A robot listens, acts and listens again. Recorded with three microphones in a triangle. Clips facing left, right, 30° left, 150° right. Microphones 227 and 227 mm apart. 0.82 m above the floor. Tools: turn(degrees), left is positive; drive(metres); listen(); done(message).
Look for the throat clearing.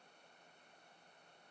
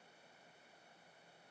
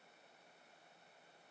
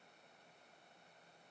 listen()
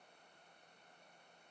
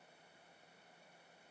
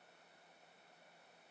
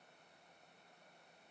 listen()
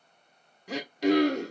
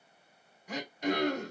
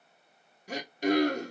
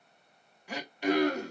turn(degrees=75)
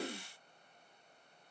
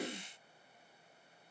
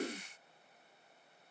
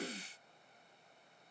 turn(degrees=-15)
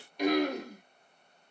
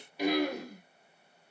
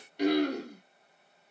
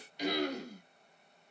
done("Facing the throat clearing.")